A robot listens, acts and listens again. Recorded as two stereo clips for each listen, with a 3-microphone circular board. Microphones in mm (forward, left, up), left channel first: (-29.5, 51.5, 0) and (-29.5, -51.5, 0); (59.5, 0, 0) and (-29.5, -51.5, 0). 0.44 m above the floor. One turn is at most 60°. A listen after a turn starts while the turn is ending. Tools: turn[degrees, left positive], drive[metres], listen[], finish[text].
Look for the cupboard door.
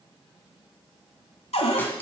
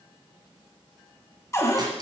Thought: The cupboard door: 90° left.
Action: turn[60]
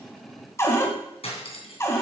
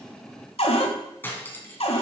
Thought: The cupboard door is now 30° left.
Action: turn[30]
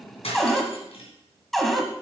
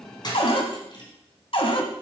Action: finish[Found it: a cupboard door, straight ahead.]